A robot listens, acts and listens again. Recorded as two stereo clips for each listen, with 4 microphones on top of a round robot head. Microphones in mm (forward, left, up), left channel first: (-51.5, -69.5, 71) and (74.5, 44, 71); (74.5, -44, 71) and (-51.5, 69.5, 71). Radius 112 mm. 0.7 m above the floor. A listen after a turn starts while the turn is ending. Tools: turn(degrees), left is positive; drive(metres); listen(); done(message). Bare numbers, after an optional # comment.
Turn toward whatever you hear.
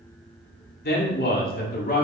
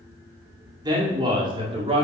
# The man speaking: 170° right.
turn(-170)
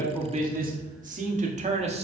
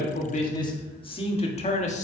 done("Facing the man speaking, 1 to 2 m away.")